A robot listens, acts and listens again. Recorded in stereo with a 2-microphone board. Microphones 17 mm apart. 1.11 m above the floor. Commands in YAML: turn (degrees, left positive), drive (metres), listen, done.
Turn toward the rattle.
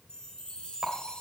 turn: -35
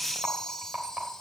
turn: -110
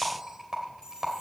turn: -25
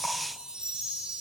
listen: true
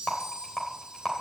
turn: 15
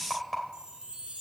done: "Found it: a rattle, straight ahead, 2 to 4 m away."